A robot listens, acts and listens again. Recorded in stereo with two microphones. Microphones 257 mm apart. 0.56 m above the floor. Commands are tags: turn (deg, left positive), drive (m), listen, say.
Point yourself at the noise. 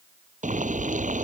<turn deg="-30"/>
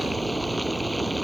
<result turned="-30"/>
<say>Found it: boiling, straight ahead.</say>